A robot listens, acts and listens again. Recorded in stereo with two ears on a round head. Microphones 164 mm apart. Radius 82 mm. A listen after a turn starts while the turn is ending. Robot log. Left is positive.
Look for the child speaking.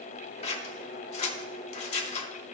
cmd idle
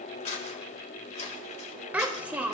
cmd yaw -30
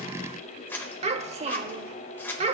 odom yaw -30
note: So it is at 140° right.
cmd yaw -140
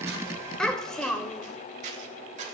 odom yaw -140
end: Found it: a child speaking, straight ahead.